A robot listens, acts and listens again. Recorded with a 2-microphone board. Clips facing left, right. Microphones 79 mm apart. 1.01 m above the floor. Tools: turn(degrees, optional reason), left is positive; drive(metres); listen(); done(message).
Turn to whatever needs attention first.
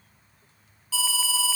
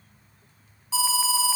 turn(degrees=-20, reason="The alarm: about 20° right or 160° right.")
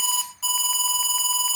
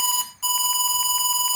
done("Facing the alarm, 1 to 2 m away.")